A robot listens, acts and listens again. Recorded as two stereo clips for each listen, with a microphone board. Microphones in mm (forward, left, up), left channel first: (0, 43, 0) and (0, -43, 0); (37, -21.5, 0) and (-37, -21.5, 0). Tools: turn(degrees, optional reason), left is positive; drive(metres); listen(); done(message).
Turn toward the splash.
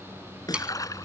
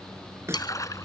turn(degrees=40, reason="The splash: 40° left.")
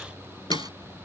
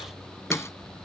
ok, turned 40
done("I heard a splash from this way, but can't make it out now.")